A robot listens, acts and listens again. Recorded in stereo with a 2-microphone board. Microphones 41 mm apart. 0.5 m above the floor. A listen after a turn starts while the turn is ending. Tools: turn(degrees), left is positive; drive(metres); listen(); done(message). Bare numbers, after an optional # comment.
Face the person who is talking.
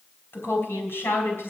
# The woman speaking: about 75° left or 105° left.
turn(75)
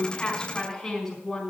done("Facing the woman speaking, over 4 m away.")